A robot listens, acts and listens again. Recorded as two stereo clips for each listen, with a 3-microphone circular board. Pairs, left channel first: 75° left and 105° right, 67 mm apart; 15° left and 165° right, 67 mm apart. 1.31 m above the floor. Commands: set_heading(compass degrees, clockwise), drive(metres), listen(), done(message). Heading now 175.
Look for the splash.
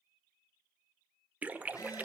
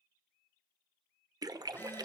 set_heading(345)
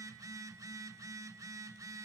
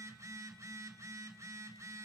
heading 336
set_heading(346)
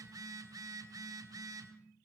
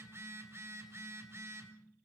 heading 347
done("I heard a splash from this way, but can't make it out now.")